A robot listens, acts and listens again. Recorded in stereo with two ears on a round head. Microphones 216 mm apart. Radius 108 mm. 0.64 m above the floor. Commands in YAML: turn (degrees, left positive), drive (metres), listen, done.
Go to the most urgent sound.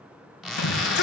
turn: 45
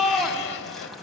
drive: 1.0
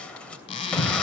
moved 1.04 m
drive: 1.0
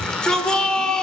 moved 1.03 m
drive: 1.0
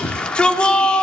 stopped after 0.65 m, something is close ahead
done: "I am next to the shout."